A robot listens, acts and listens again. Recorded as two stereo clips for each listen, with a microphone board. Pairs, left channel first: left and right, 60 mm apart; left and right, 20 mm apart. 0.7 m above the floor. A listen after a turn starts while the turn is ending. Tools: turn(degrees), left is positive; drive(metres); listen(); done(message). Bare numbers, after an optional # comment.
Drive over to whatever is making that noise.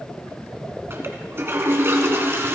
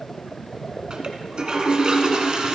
# The toilet flushing: about 40° right or 140° right.
turn(-40)
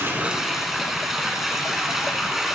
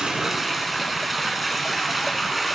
drive(1.0)
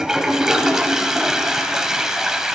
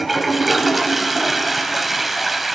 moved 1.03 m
# The toilet flushing is now 10° right.
turn(-10)
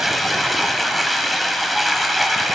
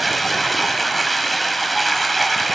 drive(1.0)
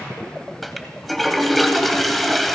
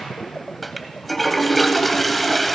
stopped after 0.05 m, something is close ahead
done("Arrived at the toilet flushing, straight ahead.")